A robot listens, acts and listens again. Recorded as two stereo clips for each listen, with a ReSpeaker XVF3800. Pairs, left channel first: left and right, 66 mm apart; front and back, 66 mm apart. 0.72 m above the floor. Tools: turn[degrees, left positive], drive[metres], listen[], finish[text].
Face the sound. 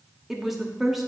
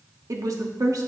Thought: The woman speaking: 175° right.
Action: turn[-175]
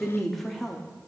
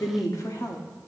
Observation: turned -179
Action: finish[Found it: a woman speaking, straight ahead.]